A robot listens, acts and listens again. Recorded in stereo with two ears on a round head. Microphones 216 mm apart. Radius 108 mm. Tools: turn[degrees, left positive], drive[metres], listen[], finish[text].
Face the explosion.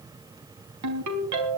Action: listen[]
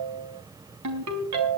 Action: listen[]
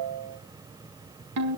Action: finish[I can't make out an explosion to turn to.]